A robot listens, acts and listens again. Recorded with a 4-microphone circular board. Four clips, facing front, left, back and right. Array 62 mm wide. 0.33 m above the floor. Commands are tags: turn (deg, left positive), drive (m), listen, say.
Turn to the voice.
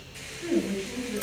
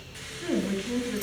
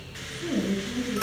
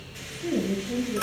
<turn deg="95"/>
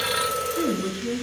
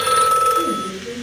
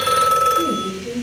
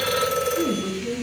<say>Facing the woman speaking, over 4 m away.</say>